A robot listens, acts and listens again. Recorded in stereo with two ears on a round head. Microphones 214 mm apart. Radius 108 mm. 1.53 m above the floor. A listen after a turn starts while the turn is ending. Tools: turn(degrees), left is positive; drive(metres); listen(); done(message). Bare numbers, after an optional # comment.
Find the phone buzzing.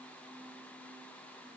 listen()
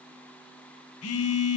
# The phone buzzing: about 70° left or 110° left.
turn(70)
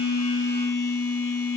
# So it is at 45° left.
turn(45)
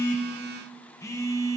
# The phone buzzing is now 10° left.
turn(10)
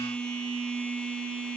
done("Found it: a phone buzzing, straight ahead, 1 to 2 m away.")